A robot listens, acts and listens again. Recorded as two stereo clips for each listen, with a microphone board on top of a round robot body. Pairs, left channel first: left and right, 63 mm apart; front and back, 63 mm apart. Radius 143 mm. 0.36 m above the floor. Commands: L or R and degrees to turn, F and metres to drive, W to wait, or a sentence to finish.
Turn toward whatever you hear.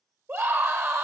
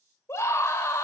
R50
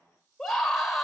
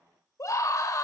Found it: a scream, straight ahead.